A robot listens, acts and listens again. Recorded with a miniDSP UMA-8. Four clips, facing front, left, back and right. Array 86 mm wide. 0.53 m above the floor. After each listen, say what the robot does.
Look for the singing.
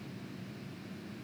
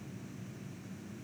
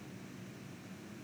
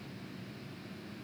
Keep listening.
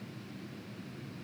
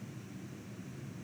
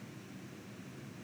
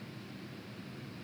Keep listening.
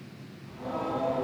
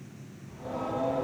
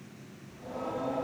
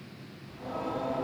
Turn 10° right.
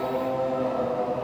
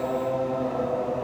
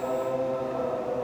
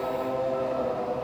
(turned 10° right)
Turn 10° left.
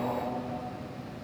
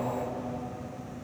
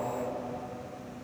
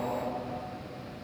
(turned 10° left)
Found it: singing, straight ahead.